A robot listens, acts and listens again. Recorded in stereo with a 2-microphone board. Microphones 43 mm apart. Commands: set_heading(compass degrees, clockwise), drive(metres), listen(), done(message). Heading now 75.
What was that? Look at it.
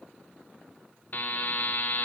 set_heading(30)
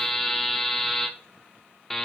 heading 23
done("Facing the buzzer.")